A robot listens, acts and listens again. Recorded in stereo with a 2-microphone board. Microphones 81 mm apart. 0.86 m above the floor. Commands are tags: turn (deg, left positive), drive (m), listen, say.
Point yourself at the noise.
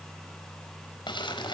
<turn deg="90"/>
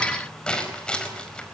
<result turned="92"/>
<turn deg="10"/>
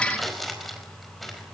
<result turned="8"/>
<say>Facing the crumpling.</say>